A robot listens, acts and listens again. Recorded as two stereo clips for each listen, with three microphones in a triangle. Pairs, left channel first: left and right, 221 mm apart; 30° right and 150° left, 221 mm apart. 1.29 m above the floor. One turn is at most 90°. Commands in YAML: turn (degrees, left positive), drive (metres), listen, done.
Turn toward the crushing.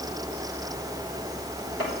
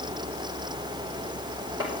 listen: true
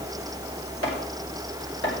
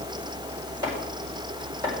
listen: true
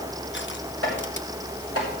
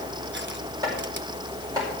done: "I can't make out crushing to turn to."